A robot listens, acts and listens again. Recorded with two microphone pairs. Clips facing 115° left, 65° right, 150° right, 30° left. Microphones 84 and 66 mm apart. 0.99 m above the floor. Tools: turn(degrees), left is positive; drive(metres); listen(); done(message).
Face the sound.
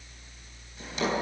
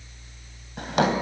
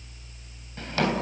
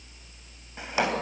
turn(degrees=-45)
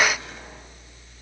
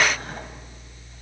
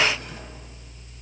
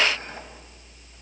listen()
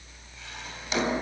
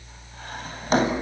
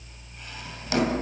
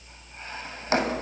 turn(degrees=-25)
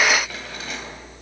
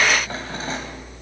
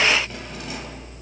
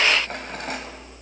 turn(degrees=-10)
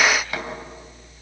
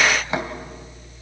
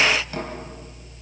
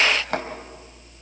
done("Facing the drawer.")